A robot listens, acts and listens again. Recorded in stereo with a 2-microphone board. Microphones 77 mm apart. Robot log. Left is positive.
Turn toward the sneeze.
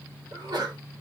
note: The sneeze: about 65° right or 115° right.
cmd yaw -65
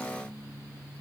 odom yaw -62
cmd idle
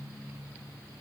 end: I heard a sneeze, but can't make it out now. It was about 5° right or 50° right.